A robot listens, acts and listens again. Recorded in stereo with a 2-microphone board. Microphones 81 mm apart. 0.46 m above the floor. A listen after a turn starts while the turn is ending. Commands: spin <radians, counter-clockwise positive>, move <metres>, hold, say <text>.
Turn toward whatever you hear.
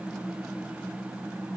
hold
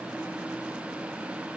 hold
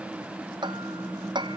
spin -1.22
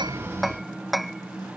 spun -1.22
say Found it: hammering, straight ahead.